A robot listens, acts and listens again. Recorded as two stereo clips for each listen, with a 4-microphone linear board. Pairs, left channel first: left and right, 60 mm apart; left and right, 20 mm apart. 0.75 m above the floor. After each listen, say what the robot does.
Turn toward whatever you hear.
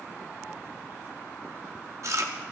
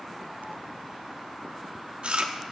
Turn 65° right.
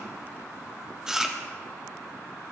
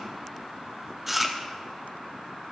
Turn 10° right.
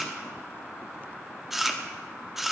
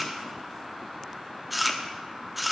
Found it: chewing, straight ahead.